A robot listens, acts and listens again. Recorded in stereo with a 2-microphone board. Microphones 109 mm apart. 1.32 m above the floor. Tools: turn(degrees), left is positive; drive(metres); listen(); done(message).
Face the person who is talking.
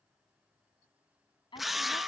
turn(degrees=50)
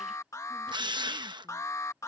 listen()
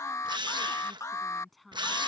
done("Found it: a woman speaking, straight ahead.")